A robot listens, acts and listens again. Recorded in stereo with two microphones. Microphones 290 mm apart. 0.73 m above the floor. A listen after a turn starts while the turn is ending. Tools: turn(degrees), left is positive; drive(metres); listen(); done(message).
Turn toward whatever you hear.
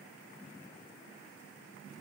listen()
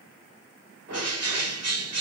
turn(degrees=-55)
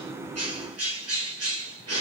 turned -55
turn(degrees=-60)
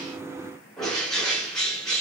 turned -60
done("Found it: a bird, straight ahead.")